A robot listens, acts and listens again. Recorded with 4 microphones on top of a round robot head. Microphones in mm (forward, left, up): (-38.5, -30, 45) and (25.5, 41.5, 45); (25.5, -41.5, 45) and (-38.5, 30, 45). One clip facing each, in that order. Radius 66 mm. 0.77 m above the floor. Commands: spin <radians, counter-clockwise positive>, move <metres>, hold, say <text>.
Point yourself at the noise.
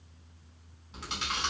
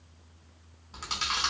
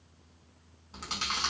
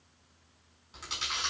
say Facing the chewing.